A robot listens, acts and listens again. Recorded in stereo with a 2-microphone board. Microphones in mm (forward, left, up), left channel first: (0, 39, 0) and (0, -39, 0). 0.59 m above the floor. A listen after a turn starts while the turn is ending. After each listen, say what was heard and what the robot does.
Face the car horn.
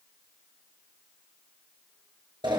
Keep listening.
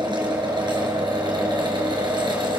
Keep listening.
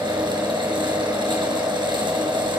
I can't make out a car horn to turn to.